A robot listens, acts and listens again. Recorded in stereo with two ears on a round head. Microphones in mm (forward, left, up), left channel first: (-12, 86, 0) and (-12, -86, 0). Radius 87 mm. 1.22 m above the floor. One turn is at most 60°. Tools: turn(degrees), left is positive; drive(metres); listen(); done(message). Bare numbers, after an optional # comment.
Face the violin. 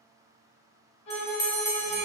# The violin: about 65° left or 115° left.
turn(60)
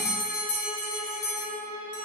# So it is at 20° left.
turn(20)
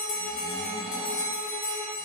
listen()
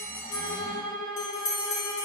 done("Facing the violin.")